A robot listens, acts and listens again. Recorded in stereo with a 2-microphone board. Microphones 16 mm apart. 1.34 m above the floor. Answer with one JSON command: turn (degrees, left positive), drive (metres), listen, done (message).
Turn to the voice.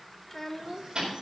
{"turn": 20}
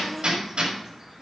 {"listen": true}
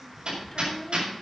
{"listen": true}
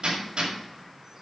{"done": "I heard a child speaking, but can't make it out now. It was about straight ahead or 140° left."}